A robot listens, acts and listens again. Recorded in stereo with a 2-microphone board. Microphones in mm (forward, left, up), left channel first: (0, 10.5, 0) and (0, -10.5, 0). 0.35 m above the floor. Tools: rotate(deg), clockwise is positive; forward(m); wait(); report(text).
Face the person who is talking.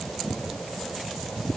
wait()
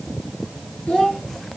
rotate(-55)
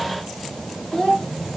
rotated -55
rotate(-70)
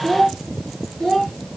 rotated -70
rotate(-25)
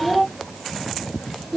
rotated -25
report("Found it: a child speaking, straight ahead.")